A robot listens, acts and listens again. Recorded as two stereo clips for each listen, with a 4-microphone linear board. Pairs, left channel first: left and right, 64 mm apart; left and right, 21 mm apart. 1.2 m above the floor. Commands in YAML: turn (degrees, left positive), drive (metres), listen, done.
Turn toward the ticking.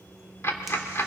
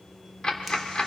turn: 45
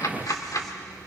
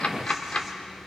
turn: 85
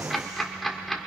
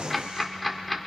done: "Found it: ticking, straight ahead, 1 to 2 m away."